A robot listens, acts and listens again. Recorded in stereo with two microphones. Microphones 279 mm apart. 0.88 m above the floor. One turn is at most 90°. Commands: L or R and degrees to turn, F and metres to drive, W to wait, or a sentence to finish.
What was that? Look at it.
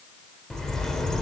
L30
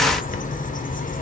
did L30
L90
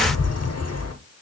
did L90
L70
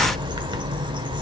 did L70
R20
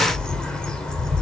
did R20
Facing the bird.